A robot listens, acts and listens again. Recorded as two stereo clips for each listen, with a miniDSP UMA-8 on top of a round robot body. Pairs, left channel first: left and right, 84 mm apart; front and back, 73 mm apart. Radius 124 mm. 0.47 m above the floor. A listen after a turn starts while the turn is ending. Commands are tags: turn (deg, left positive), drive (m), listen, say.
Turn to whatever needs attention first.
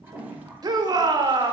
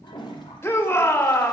<turn deg="-55"/>
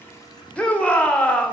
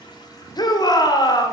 <turn deg="15"/>
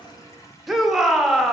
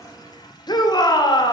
<say>Facing the shout.</say>